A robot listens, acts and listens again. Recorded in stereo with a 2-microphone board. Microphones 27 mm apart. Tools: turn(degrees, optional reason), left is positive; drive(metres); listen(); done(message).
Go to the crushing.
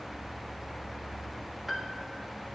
listen()
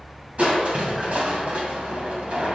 turn(degrees=-65, reason="The crushing: about 65° right or 115° right.")
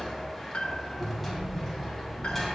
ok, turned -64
drive(metres=1.0)
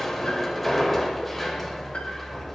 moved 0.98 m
drive(metres=1.0)
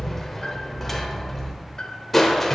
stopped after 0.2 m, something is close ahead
done("I am next to the crushing.")